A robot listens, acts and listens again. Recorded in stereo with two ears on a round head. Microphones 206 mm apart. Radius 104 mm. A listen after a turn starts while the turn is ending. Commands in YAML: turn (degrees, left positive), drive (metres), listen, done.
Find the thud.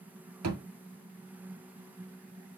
turn: -90
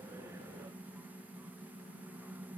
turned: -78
turn: -10
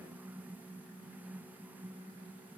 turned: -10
done: "I heard a thud from this way, but can't make it out now."